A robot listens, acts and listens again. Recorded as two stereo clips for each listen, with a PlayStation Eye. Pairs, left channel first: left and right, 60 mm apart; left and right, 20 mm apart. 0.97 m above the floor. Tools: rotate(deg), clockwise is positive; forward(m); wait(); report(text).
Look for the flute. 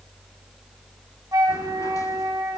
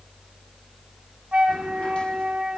rotate(90)
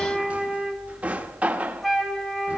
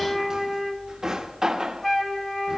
report("Facing the flute, 1 to 2 m away.")